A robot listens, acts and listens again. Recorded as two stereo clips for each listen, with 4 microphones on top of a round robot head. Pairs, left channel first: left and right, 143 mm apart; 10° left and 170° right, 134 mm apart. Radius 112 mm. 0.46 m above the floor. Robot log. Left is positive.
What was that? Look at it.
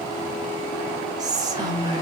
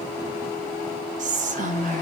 note: The whispering: 155° right.
cmd yaw -155
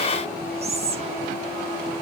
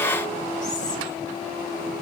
cmd idle
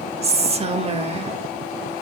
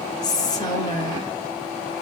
note: The whispering is now 50° right.
cmd yaw -50
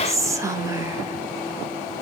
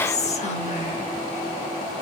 note: The whispering is now 25° right.
cmd yaw -25
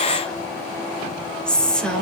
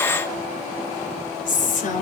end: Facing the whispering, 1 to 2 m away.